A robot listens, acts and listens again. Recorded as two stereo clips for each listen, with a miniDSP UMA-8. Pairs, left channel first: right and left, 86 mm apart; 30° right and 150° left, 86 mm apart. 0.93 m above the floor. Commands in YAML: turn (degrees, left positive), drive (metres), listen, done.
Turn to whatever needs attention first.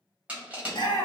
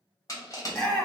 turn: -110
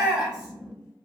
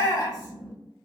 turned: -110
turn: 15
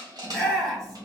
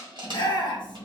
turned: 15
done: "Found it: a shout, straight ahead, 1 to 2 m away."